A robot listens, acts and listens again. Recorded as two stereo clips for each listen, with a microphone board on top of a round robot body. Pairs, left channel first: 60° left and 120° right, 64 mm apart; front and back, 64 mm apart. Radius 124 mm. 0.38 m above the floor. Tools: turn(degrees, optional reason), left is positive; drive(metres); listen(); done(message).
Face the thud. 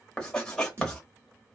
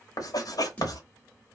turn(degrees=-70, reason="The thud: 70° right.")
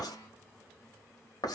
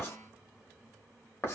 done("I heard a thud from this way, but can't make it out now.")